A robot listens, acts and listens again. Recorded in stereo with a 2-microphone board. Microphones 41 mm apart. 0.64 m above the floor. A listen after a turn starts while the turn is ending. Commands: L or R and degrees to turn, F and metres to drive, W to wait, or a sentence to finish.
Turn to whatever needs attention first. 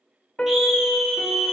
R30
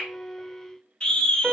L25
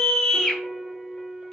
L15
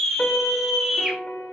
Found it: a scream, straight ahead, 2 to 4 m away.